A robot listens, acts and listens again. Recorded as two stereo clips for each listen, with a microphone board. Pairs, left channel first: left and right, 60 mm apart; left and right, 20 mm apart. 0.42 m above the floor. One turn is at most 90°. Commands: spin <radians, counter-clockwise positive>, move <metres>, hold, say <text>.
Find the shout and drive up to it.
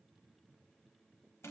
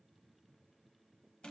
hold
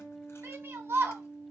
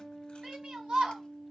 spin -0.70
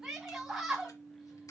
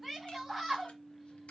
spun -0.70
move 1.0
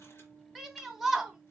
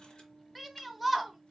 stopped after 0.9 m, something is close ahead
say I am next to the shout.